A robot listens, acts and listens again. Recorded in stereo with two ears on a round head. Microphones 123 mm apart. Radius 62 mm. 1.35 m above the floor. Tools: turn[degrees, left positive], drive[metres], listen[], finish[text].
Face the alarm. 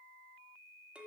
Action: listen[]
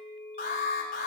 Thought: The alarm: about 70° left or 110° left.
Action: turn[70]
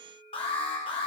Thought: So it is at 40° left.
Action: turn[40]
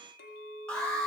Action: finish[Facing the alarm.]